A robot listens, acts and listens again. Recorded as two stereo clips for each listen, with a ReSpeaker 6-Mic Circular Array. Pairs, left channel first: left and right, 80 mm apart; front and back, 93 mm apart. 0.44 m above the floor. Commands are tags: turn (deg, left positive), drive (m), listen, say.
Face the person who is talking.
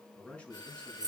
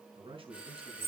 <turn deg="165"/>
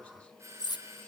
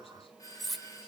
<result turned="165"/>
<listen/>
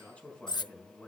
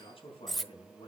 <turn deg="15"/>
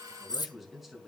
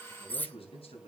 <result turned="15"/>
<say>Found it: a man speaking, straight ahead.</say>